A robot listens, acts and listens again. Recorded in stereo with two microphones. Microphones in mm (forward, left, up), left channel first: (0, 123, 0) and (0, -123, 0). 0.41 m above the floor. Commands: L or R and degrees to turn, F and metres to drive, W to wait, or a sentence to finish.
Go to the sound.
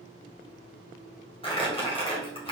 L20
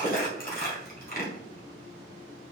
L135
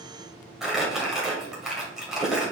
F1.0
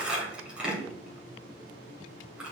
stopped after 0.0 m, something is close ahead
Something is in my way. I am facing the crumpling but have not reached it.